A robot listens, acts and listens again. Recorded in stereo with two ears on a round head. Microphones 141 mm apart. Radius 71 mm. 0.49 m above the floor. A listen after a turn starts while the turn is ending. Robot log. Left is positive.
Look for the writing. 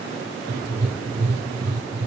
note: The writing: about 25° right or 155° right.
cmd yaw -25
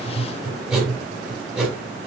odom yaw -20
end: Facing the writing.